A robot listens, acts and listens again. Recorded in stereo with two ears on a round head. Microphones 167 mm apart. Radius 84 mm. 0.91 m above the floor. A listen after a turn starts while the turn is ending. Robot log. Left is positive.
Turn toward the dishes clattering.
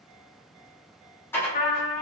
cmd yaw +30
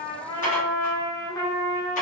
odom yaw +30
note: So it is at 135° left.
cmd yaw +135
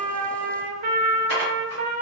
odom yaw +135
note: The dishes clattering is now 60° left.
cmd yaw +60
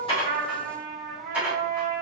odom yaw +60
note: The dishes clattering is now 10° right.
cmd yaw -10
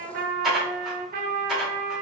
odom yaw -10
end: Facing the dishes clattering.